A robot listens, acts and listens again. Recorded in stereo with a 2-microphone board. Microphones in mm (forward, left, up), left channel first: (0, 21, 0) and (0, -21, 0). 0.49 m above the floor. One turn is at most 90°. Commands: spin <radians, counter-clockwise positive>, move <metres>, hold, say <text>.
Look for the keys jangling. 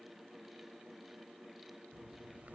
hold
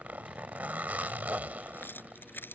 spin 0.96
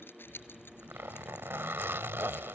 spin 1.13
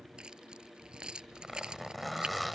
spin -0.35
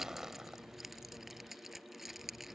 say Facing the keys jangling.